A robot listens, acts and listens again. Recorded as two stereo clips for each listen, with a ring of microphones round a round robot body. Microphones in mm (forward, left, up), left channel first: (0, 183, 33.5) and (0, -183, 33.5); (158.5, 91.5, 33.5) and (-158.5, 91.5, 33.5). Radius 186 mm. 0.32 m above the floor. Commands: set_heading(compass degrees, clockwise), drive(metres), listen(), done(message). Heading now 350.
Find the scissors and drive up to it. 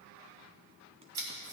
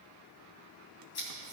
set_heading(45)
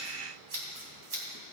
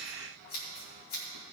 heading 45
set_heading(85)
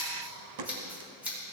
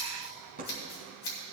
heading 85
drive(1.0)
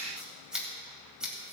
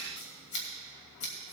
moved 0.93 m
drive(1.0)
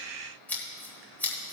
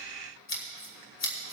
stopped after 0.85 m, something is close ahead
done("I am next to the scissors.")